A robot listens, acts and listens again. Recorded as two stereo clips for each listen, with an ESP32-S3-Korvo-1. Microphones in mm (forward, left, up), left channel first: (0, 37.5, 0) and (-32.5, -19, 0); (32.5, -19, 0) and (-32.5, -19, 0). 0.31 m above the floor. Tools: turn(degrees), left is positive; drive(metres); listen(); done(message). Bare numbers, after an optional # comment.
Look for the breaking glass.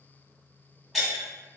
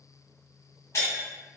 # The breaking glass: 30° right.
turn(-30)
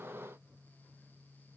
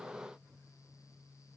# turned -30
done("Facing where the breaking glass came from. I can't hear it now.")